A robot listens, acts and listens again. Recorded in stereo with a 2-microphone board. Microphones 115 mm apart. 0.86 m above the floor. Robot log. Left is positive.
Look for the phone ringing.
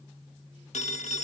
cmd yaw +90
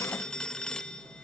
end: Found it: a phone ringing, straight ahead.